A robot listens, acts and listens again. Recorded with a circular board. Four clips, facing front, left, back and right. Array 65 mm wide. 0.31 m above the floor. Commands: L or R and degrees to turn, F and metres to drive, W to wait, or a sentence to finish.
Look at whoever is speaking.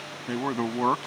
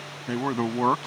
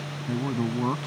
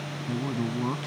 L60
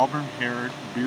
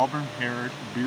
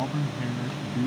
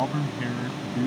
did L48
L30
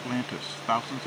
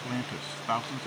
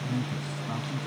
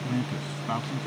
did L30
L10
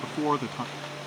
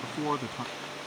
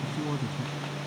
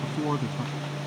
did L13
Facing the man speaking.